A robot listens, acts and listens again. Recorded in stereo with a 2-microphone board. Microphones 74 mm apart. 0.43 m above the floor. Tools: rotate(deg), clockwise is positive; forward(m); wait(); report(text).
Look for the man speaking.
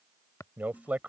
rotate(20)
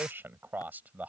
rotate(20)
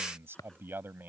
rotate(25)
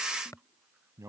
rotate(135)
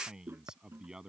rotate(10)
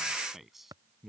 report("Found it: a man speaking, straight ahead.")